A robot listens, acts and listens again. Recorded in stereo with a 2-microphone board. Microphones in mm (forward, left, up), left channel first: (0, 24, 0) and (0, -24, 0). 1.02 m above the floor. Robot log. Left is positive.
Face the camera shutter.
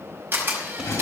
note: The camera shutter: about 40° right or 140° right.
cmd yaw -40
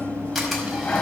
cmd idle
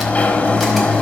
cmd idle
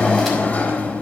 end: I heard a camera shutter, but can't make it out now. It was about straight ahead or 100° right.